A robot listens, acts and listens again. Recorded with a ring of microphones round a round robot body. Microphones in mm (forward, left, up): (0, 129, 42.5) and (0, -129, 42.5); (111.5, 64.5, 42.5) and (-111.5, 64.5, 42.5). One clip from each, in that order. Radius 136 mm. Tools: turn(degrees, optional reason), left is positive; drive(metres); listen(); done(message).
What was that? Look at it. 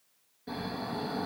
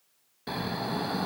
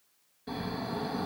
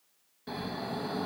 turn(degrees=-105, reason="The snoring: 105° right.")
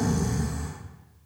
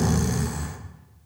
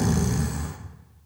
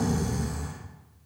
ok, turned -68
turn(degrees=-35, reason="The snoring is now 35° right.")
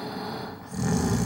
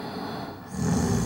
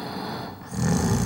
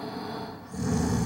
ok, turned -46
turn(degrees=10, reason="The snoring is now 10° left.")
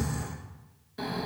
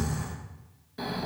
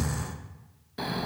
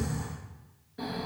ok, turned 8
done("Facing the snoring, under 1 m away.")